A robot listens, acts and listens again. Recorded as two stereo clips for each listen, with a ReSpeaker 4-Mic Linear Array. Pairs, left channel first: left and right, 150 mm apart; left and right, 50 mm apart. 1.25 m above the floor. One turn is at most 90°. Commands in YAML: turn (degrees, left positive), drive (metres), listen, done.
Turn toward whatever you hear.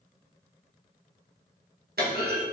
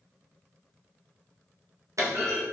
turn: -90
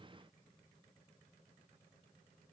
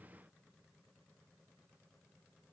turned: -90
done: "Facing where the clunk came from. I can't hear it now."